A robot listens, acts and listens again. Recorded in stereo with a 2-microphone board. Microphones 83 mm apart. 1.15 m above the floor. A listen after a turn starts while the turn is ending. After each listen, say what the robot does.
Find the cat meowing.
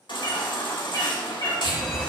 Turn 40° left.
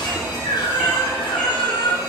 Keep listening.
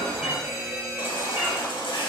Keep listening.
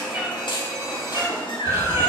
Turn 30° right.
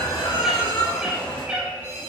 Turn 15° right.
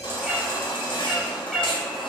Facing the cat meowing.